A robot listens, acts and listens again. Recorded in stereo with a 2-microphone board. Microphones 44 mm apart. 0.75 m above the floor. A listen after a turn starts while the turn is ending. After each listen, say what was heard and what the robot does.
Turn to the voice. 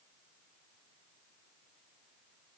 Keep listening.
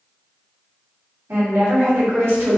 The woman speaking: about 70° right or 110° right. Turn 70° right.
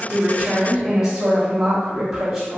So it is at 15° right. Turn 15° right.
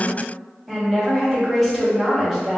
Found it: a woman speaking, straight ahead, 1 to 2 m away.